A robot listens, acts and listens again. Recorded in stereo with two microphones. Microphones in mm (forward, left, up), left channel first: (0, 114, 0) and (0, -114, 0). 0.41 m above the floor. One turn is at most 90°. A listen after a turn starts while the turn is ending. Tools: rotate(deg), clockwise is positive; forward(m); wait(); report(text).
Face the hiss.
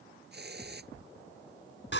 rotate(50)
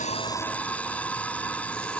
wait()
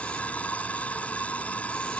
wait()
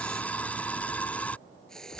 report("Facing the hiss.")